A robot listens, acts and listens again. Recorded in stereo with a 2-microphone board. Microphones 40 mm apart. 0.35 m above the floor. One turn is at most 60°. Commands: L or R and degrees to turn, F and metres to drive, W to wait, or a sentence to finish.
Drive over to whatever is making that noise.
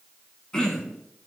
L20
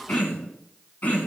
L60
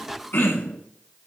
L60
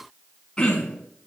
L20
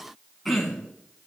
F1.0
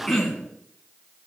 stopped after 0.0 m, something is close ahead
Blocked. The throat clearing is further on, straight ahead.